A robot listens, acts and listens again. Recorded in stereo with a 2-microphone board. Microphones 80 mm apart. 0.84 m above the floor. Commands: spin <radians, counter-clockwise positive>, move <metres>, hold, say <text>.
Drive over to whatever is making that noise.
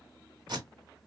spin -0.96
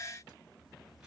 hold
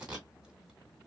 spin -0.17
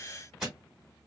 move 1.0
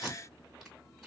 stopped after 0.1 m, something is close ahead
say Blocked. The tape being pulled is further on, straight ahead.